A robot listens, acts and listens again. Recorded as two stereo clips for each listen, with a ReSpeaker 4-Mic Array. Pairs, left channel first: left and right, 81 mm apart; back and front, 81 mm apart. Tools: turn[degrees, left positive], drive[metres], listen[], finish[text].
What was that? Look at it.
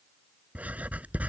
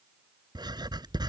Thought: The writing: 20° right.
Action: turn[-20]
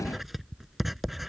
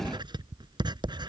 Action: finish[Found it: writing, straight ahead.]